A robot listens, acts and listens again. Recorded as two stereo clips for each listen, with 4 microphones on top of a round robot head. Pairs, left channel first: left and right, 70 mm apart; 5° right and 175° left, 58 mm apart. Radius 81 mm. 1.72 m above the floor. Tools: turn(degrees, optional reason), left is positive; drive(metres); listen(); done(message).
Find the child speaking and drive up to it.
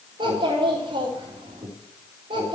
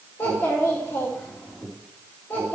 turn(degrees=-70, reason="The child speaking: 70° right.")
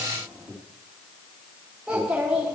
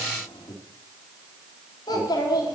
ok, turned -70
turn(degrees=-10, reason="The child speaking is now 10° right.")
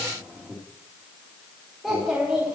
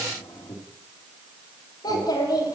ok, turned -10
drive(metres=1.0)
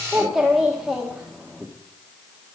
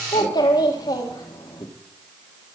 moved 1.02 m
drive(metres=1.0)
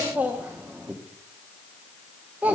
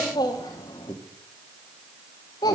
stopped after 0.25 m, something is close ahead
turn(degrees=-15, reason="The child speaking is now 15° right.")
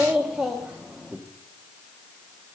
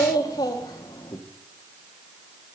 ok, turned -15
done("I am next to the child speaking.")